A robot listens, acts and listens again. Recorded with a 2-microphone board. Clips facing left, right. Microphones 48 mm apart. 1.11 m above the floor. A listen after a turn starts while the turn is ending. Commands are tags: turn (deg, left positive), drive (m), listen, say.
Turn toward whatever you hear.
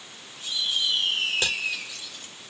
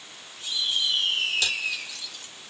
<turn deg="35"/>
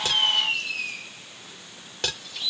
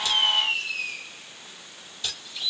<turn deg="110"/>
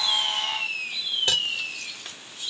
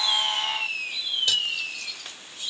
<turn deg="35"/>
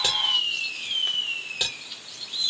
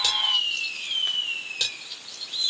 <turn deg="15"/>
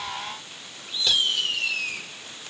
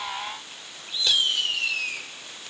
<listen/>
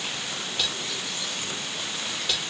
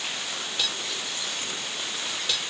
<say>Found it: cutlery clinking, straight ahead.</say>